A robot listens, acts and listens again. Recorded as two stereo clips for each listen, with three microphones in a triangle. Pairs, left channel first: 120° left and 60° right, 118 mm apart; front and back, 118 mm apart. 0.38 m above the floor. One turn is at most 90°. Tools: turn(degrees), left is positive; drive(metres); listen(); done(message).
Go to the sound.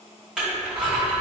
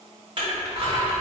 turn(degrees=-90)
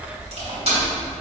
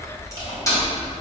turn(degrees=-55)
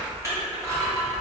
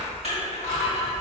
drive(metres=1.0)
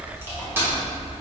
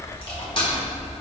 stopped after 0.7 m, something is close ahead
done("I am next to the crushing.")